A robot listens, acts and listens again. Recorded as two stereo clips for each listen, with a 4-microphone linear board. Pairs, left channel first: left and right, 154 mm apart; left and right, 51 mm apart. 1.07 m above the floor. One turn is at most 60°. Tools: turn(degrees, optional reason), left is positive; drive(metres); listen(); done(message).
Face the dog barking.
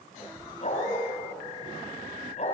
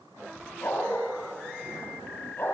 turn(degrees=50, reason="The dog barking: about 50° left or 130° left.")
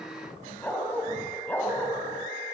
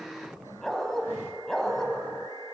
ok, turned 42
turn(degrees=10, reason="So it is at 10° left.")
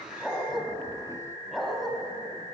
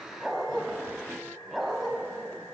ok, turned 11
done("Facing the dog barking, 2 to 4 m away.")